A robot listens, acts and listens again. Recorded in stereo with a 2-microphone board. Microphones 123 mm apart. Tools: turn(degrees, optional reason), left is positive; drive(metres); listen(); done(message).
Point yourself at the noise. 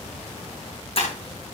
turn(degrees=50, reason="The breaking glass: about 50° left or 130° left.")
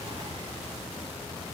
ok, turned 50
listen()
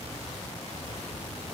done("I heard breaking glass, but can't make it out now. It was about straight ahead or 80° left.")